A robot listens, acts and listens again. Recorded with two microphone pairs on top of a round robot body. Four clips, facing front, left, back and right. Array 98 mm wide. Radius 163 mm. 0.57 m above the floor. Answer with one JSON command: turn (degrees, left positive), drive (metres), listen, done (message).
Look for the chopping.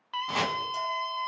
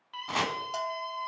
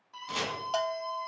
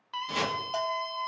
{"turn": 55}
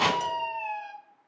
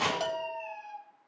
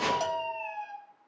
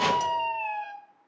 {"turn": 10}
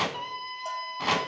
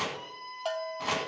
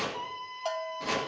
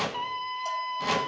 {"done": "Found it: chopping, straight ahead."}